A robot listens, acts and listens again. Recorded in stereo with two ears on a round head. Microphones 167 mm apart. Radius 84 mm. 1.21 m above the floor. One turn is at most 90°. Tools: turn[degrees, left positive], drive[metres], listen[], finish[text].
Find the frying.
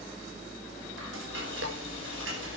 Thought: The frying: about 75° right or 105° right.
Action: turn[-75]
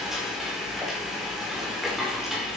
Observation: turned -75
Action: finish[Found it: frying, straight ahead.]